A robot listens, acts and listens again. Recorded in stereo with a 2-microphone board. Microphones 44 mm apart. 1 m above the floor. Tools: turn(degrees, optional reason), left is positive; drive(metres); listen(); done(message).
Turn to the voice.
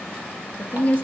turn(degrees=35, reason="The woman speaking: about 35° left or 145° left.")
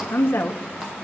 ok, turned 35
turn(degrees=110, reason="So it is at 110° left.")
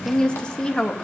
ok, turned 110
turn(degrees=20, reason="The woman speaking is now 20° left.")
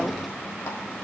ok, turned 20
done("Found it: a woman speaking, straight ahead.")